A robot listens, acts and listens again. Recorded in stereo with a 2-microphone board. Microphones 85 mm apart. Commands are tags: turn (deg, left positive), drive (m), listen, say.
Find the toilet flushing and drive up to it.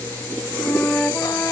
<listen/>
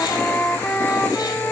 <listen/>
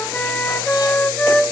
<say>I can't make out a toilet flushing, only a flute.</say>